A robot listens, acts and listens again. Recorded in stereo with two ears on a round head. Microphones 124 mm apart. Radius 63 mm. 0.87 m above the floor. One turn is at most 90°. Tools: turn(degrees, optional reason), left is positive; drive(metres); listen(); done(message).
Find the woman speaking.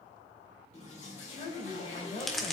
turn(degrees=40, reason="The woman speaking: about 40° left or 140° left.")
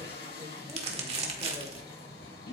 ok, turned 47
listen()
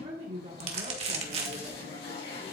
turn(degrees=-45, reason="So it is at 45° right.")
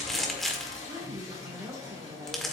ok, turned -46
turn(degrees=-15, reason="The woman speaking is now 15° right.")
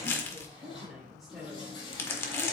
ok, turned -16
done("Found it: a woman speaking, straight ahead, 2 to 4 m away.")